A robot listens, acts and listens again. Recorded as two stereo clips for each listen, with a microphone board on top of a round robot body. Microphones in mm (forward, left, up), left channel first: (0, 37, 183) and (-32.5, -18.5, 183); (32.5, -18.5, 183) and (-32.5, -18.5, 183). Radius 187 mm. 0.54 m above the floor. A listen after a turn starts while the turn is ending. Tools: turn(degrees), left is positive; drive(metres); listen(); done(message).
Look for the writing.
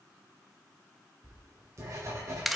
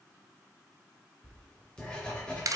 turn(degrees=-75)
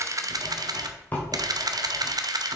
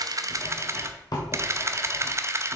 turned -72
done("Found it: writing, straight ahead.")